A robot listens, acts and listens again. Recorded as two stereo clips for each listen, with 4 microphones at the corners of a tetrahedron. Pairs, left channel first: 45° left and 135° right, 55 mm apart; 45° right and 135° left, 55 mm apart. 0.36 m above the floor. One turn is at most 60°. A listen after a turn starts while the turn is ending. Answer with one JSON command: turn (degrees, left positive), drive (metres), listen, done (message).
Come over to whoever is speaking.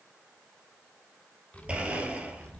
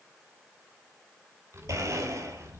{"turn": 60}
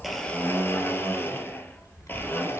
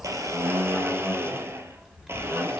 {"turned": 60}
{"turn": 55}
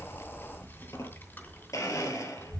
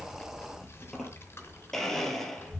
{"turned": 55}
{"drive": 1.0}
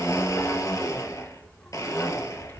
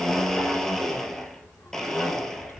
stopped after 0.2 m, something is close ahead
{"done": "Blocked. The child speaking is further on, straight ahead."}